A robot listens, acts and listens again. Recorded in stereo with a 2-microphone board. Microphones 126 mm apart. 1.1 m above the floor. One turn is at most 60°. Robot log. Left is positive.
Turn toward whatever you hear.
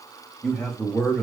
cmd yaw +30
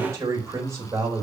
note: So it is at 25° right.
cmd yaw -25
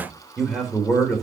end: Found it: a man speaking, straight ahead, 2 to 4 m away.